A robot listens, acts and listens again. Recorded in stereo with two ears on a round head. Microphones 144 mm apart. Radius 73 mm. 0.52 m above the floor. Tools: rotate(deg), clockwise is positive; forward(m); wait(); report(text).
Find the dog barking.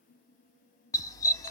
rotate(-25)
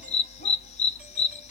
rotate(-130)
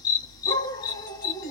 rotate(-25)
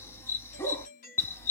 rotate(-15)
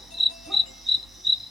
report("Facing the dog barking, under 1 m away.")